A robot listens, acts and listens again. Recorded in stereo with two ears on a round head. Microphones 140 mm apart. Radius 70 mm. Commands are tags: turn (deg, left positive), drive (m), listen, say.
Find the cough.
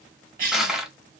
<turn deg="-60"/>
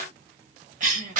<turn deg="-55"/>
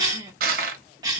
<turn deg="-25"/>
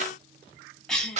<say>Facing the cough.</say>